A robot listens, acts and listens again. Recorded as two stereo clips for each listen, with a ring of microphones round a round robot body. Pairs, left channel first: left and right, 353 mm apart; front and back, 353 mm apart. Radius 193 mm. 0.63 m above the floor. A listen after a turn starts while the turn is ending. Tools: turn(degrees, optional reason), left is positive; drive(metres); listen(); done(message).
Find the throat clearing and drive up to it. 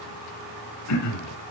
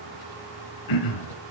turn(degrees=40, reason="The throat clearing: 40° left.")
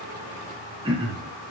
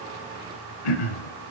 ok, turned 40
turn(degrees=-10, reason="The throat clearing is now 10° right.")
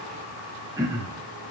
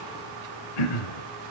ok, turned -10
turn(degrees=-10, reason="The throat clearing is now 10° right.")
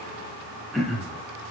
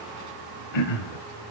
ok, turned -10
drive(metres=1.0)
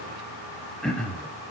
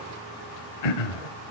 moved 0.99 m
drive(metres=1.0)
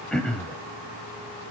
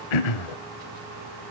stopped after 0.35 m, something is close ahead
done("I am next to the throat clearing.")